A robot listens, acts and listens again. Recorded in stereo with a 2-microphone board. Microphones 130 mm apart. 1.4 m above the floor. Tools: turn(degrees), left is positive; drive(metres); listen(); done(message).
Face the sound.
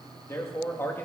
turn(degrees=15)
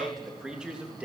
turn(degrees=-10)
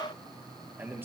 turn(degrees=-20)
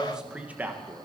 turn(degrees=-20)
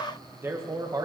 turn(degrees=-30)
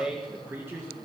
turn(degrees=-20)
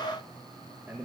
turn(degrees=-15)
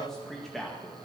done("Found it: a man speaking, straight ahead, 1 to 2 m away.")